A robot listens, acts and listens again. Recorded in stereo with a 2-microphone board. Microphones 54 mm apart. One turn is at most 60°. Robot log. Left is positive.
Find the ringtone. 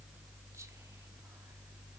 cmd idle
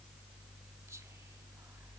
cmd idle
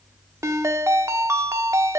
note: The ringtone: about 65° right or 115° right.
cmd yaw -60
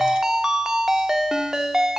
note: So it is at 10° right.
cmd yaw -10
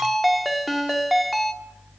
end: Facing the ringtone.